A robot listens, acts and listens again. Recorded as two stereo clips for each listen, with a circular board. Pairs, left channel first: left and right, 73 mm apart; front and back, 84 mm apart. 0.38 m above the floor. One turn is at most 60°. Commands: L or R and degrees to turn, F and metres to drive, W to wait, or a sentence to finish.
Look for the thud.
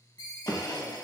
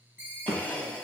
L60
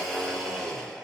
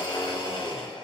L60
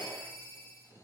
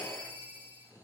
L25
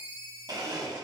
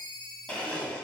I heard a thud from this way, but can't make it out now.